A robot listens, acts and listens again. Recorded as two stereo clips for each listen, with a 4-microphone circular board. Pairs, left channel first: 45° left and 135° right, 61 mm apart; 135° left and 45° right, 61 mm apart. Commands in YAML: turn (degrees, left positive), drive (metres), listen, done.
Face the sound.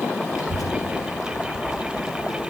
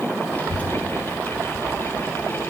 turn: 65
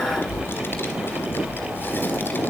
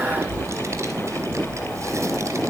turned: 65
turn: -10
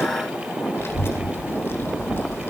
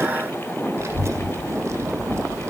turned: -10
done: "Found it: a child speaking, straight ahead."